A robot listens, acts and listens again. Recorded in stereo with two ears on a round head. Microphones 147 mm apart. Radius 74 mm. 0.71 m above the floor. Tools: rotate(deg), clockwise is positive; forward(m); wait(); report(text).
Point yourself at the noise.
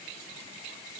wait()
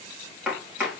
rotate(30)
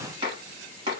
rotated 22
rotate(150)
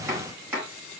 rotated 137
rotate(15)
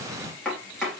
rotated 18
report("Found it: chopping, straight ahead.")